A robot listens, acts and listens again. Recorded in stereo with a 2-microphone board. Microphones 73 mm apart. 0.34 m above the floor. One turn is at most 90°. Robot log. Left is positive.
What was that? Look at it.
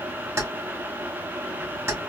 note: The keys jangling: about 40° right or 140° right.
cmd yaw -40
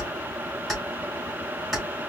end: Found it: keys jangling, straight ahead, 2 to 4 m away.